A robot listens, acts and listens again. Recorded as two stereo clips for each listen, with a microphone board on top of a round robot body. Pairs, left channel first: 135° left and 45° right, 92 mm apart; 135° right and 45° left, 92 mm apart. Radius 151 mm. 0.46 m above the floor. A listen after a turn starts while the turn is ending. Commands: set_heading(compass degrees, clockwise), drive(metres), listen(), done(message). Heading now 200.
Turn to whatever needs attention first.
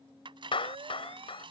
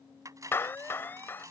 set_heading(265)
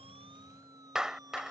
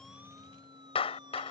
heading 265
done("Found it: a siren, straight ahead.")